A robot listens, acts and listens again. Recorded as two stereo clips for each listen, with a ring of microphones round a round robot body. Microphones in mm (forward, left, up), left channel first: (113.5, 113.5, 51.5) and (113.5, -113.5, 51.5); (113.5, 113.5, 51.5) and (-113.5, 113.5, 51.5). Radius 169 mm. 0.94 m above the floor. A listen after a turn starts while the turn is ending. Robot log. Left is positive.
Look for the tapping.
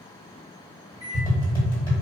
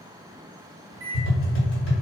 note: The tapping: 20° left.
cmd yaw +20
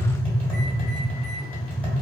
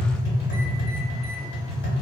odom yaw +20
note: The tapping is now 10° left.
cmd yaw +10
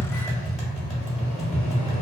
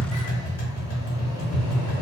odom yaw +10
end: Found it: tapping, straight ahead.